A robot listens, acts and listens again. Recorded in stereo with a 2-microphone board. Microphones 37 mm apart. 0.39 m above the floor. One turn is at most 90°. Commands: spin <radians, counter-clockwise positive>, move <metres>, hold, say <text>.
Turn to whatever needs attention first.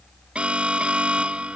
spin -0.52
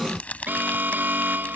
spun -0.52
spin -1.57
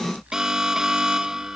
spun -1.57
spin -0.26
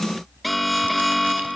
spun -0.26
say Found it: an alarm, straight ahead.